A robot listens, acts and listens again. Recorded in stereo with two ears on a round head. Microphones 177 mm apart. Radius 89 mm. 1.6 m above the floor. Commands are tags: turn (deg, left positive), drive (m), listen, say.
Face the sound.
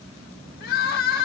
<turn deg="50"/>
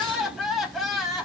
<say>Facing the crying.</say>